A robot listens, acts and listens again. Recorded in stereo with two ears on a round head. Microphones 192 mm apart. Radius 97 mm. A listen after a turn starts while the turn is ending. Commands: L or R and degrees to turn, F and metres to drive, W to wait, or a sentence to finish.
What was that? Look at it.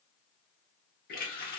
L45
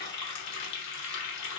L85
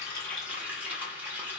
R10
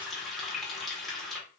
Facing the running tap, 1 to 2 m away.